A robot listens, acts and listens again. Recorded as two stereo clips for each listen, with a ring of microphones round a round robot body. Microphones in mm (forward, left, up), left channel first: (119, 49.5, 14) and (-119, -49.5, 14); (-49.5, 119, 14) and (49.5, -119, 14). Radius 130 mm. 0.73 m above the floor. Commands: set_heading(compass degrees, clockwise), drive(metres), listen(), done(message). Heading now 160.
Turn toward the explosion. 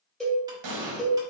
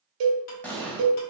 set_heading(325)
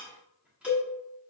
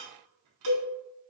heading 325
done("Facing where the explosion came from. I can't hear it now.")